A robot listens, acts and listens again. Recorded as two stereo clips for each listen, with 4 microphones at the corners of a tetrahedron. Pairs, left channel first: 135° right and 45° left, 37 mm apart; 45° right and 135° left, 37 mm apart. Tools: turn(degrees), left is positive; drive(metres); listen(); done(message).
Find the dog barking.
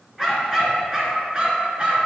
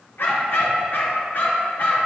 turn(degrees=-15)
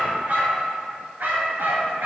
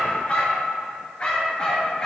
turn(degrees=20)
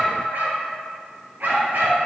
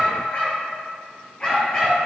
turn(degrees=20)
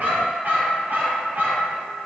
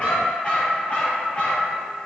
turn(degrees=10)
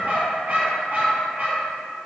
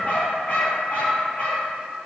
done("Facing the dog barking, 2 to 4 m away.")